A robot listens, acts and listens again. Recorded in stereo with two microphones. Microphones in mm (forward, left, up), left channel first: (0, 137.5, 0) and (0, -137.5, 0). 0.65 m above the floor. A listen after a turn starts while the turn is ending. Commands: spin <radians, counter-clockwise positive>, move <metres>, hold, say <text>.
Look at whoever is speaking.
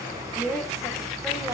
spin 0.52
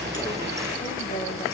hold
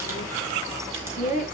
spin 2.62
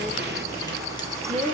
spin -0.44
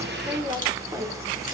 spin -0.17
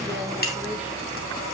hold
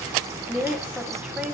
say Facing the woman speaking, 1 to 2 m away.